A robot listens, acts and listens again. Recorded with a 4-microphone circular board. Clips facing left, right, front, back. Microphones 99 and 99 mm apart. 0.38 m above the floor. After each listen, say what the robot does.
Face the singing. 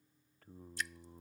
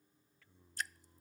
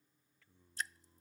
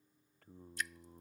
Turn 135° left.
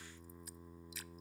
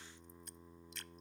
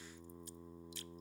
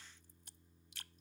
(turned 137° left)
Found it: singing, straight ahead.